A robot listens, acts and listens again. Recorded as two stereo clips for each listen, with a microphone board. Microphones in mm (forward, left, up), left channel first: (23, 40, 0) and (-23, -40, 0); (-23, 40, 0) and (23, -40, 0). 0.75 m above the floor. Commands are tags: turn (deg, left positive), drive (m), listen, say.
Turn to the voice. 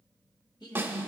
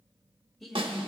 <turn deg="30"/>
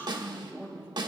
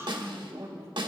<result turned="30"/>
<say>Facing the woman speaking.</say>